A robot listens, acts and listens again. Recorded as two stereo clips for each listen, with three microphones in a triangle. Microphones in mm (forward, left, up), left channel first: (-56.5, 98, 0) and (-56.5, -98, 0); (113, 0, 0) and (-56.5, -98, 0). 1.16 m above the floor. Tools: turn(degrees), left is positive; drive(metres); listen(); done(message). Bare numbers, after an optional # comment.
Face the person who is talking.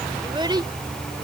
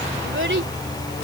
# The child speaking: 155° right.
turn(-155)
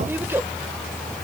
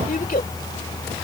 # The child speaking is now 15° right.
turn(-15)
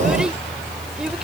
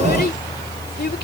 done("Facing the child speaking.")